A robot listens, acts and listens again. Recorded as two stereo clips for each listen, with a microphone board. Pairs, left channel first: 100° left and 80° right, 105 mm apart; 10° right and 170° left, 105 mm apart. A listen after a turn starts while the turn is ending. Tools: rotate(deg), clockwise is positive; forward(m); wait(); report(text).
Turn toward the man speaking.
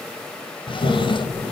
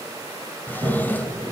wait()
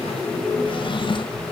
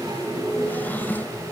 wait()
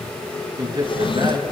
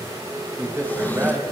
rotate(125)
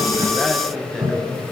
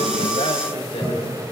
rotate(-10)
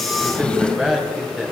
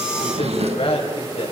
report("Found it: a man speaking, straight ahead, over 4 m away.")